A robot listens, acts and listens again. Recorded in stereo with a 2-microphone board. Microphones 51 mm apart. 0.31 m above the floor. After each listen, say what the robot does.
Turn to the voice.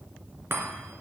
Keep listening.
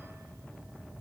Keep listening.
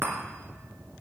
I can't make out anyone speaking to turn to.